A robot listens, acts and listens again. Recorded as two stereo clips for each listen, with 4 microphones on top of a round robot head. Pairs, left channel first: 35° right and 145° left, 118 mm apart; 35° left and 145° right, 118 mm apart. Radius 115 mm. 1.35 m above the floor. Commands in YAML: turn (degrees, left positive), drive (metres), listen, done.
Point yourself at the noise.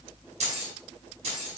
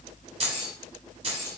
turn: 175
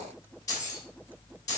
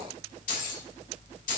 turn: 25
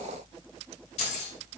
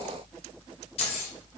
done: "Found it: keys jangling, straight ahead."